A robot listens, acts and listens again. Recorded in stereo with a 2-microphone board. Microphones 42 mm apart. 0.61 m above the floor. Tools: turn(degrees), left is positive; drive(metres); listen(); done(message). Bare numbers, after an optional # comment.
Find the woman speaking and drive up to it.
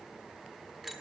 listen()
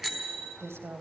turn(-90)
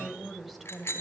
drive(1.0)
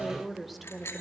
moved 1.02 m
drive(1.0)
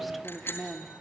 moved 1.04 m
drive(1.0)
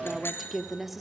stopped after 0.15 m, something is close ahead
done("Arrived at the woman speaking, straight ahead.")